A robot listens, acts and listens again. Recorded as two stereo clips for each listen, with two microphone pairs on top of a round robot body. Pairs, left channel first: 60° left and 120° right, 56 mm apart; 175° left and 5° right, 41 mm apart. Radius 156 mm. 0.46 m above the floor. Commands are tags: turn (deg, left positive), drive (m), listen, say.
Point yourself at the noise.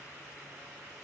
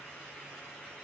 <listen/>
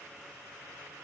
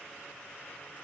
<listen/>
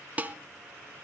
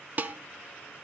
<turn deg="-55"/>
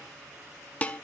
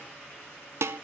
<say>Found it: dishes clattering, straight ahead.</say>